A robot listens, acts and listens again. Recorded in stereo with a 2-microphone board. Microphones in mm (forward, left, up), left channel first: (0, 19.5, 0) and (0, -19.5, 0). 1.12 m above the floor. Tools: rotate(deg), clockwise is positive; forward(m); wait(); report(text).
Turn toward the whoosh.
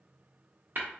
wait()
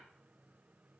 wait()
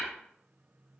report("I can't make out a whoosh to turn to.")